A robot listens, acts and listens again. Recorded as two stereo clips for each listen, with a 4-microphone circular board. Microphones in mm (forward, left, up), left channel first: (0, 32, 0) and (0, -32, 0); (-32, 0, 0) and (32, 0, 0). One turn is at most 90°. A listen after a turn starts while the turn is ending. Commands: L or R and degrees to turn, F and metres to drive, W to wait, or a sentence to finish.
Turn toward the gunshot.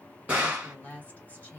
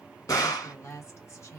R90
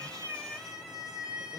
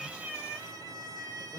R70
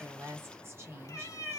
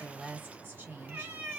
Facing where the gunshot came from. I can't hear it now.